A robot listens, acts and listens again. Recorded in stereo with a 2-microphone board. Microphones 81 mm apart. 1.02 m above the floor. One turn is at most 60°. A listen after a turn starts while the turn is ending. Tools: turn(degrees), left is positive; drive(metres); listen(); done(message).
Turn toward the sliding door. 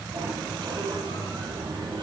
turn(degrees=-60)
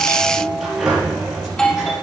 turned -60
done("Found it: a sliding door, straight ahead.")